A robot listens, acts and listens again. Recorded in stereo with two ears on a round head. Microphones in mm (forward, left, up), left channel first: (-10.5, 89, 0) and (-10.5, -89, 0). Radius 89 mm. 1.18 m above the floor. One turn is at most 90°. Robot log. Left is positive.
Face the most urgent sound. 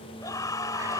note: The scream: about 15° left or 165° left.
cmd yaw +15
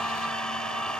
end: Found it: a scream, straight ahead.